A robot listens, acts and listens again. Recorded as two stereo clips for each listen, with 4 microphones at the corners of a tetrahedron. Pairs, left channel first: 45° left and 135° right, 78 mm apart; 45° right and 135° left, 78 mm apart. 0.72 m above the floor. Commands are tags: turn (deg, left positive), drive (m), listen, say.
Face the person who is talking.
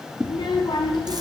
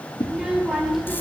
<turn deg="45"/>
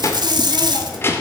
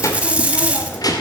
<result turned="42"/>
<turn deg="-15"/>
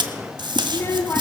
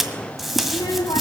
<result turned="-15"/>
<turn deg="-15"/>
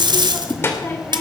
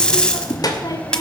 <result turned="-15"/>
<turn deg="-20"/>
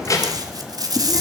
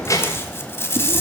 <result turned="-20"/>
<say>Facing the child speaking.</say>